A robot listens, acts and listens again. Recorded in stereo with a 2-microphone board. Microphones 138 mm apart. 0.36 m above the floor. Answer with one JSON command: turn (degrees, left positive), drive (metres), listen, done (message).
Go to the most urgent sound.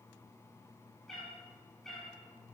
{"listen": true}
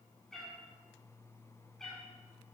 {"listen": true}
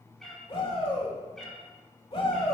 {"turn": 45}
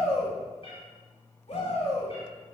{"turn": 80}
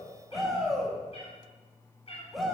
{"drive": 1.0}
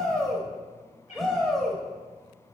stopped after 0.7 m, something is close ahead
{"done": "Arrived at the shout, straight ahead."}